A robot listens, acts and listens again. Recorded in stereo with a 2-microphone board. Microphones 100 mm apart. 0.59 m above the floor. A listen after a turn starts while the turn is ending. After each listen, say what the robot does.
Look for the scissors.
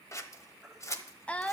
Turn 30° left.
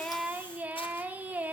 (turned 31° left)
Keep listening.
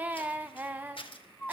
Turn 120° left.
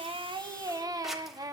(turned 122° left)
Keep listening.
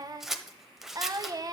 Found it: scissors, straight ahead, 1 to 2 m away.